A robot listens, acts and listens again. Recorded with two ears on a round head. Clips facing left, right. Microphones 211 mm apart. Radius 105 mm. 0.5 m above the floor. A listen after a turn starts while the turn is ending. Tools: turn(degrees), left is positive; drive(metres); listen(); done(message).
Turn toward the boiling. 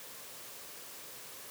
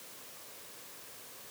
listen()
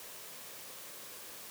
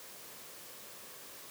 listen()
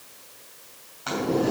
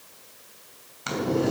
turn(degrees=-35)
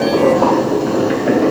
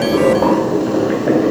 done("Facing the boiling.")